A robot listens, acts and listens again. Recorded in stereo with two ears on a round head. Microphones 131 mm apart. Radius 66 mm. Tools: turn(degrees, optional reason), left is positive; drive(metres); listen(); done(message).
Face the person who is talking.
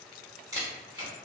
listen()
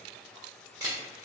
listen()
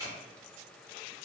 done("I can't make out anyone speaking, only a camera shutter.")